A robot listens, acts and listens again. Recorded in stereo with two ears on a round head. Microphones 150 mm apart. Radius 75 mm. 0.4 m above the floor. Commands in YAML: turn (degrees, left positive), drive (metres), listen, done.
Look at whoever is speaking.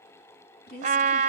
turn: 65
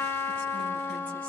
listen: true
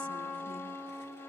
listen: true
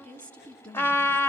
turn: 10
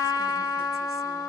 listen: true
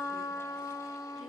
listen: true
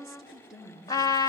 done: "Found it: a woman speaking, straight ahead."